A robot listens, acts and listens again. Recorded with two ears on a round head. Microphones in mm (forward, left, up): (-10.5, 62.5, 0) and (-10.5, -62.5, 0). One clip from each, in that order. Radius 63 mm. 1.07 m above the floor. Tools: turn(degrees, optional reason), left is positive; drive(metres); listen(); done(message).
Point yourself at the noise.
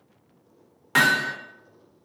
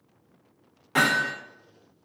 turn(degrees=45, reason="The hammering: about 45° left or 135° left.")
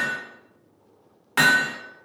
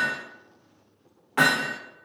turn(degrees=90, reason="So it is at 90° left.")
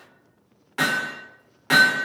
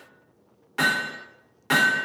done("Found it: hammering, straight ahead, under 1 m away.")